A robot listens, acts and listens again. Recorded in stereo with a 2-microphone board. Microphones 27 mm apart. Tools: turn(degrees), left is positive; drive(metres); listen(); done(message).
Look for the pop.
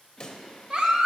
turn(degrees=25)
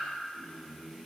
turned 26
listen()
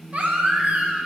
done("I heard a pop, but can't make it out now. It was about straight ahead or 130° left.")